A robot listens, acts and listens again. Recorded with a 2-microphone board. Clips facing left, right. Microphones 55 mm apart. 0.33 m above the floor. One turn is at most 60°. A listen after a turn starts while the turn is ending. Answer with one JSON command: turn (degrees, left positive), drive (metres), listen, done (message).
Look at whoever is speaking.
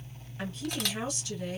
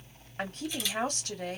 {"turn": -50}
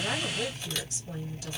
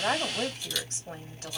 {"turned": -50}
{"turn": -60}
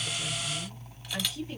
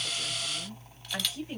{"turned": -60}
{"turn": -25}
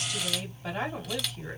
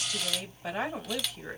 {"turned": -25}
{"turn": -15}
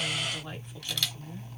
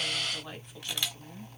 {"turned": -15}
{"done": "Facing the woman speaking, 1 to 2 m away."}